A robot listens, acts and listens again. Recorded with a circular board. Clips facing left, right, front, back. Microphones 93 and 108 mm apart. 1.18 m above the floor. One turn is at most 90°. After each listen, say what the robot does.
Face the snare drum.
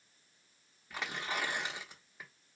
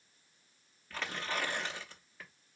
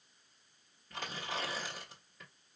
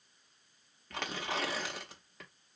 Keep listening.
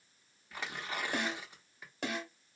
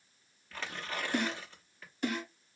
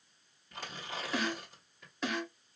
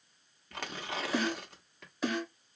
Turn 90° left.
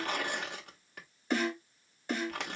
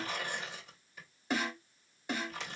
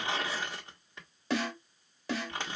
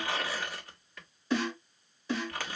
Turn 10° right.
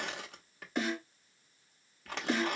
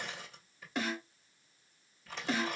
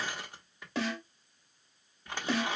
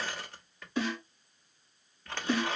Found it: a snare drum, straight ahead.